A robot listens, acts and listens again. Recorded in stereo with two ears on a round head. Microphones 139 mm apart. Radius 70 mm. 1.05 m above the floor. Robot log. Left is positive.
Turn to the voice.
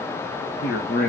note: The man speaking: about 70° left or 110° left.
cmd yaw +70
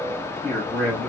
end: Facing the man speaking, 2 to 4 m away.